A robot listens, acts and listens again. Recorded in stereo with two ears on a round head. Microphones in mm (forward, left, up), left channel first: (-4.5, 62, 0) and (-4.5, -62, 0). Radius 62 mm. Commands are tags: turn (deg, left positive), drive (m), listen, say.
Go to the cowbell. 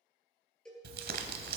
<turn deg="30"/>
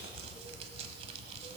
<listen/>
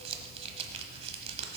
<listen/>
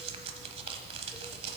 <say>I heard a cowbell, but can't make it out now. It was about 25° right or 145° left. I did not reach it.</say>